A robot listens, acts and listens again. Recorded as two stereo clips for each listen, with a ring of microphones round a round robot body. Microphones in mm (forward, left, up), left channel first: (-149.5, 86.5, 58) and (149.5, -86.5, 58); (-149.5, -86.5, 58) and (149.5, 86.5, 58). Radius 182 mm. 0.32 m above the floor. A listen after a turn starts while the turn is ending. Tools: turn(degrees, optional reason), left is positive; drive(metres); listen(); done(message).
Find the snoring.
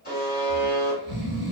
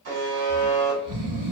turn(degrees=30, reason="The snoring: 30° left.")
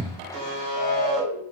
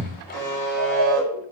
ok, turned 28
done("Found it: snoring, straight ahead.")